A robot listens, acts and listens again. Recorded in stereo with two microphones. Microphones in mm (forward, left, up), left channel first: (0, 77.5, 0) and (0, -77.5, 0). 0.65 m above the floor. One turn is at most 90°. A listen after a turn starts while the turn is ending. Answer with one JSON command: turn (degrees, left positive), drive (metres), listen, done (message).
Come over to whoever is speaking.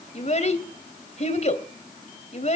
{"turn": 45}
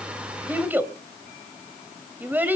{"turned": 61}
{"turn": -10}
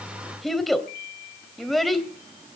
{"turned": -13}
{"drive": 1.0}
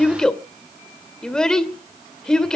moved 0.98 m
{"drive": 1.0}
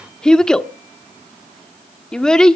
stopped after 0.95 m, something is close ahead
{"done": "Arrived at the child speaking, straight ahead."}